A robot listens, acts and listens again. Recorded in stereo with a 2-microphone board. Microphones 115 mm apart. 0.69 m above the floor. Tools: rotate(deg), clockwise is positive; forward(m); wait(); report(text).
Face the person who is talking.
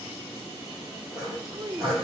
rotate(35)
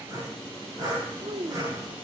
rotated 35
rotate(105)
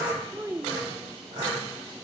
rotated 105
rotate(25)
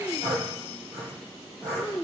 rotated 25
rotate(-15)
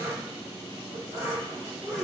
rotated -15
wait()
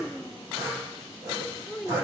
report("Facing the child speaking.")